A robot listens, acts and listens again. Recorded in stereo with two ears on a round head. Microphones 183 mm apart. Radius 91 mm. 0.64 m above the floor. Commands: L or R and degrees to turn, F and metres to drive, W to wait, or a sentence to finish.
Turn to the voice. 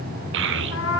R65
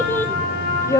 L15
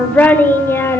L10
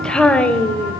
Found it: a child speaking, straight ahead.